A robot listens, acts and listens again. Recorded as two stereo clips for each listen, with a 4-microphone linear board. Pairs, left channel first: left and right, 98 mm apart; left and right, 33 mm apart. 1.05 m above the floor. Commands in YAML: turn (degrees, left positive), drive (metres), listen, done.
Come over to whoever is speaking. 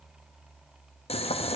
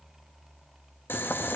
listen: true
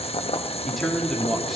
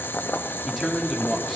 turn: 30
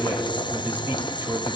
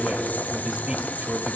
turn: -25
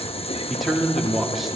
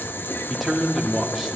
drive: 1.0
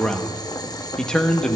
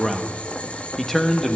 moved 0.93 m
drive: 1.0
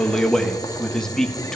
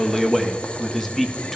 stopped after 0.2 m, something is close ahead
done: "I am next to the man speaking."